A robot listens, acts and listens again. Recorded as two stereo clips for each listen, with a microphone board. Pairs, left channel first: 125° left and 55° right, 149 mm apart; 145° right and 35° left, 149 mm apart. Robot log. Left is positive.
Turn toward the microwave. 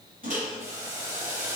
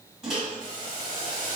note: The microwave: 50° right.
cmd yaw -50
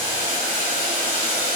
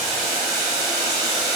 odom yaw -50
cmd idle
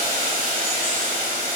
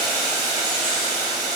cmd idle
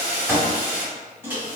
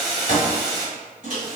note: The microwave is now 20° left.
cmd yaw +20
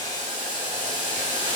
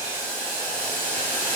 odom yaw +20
cmd idle
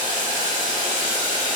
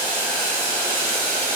cmd idle
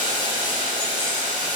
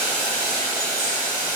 end: Facing where the microwave came from. I can't hear it now.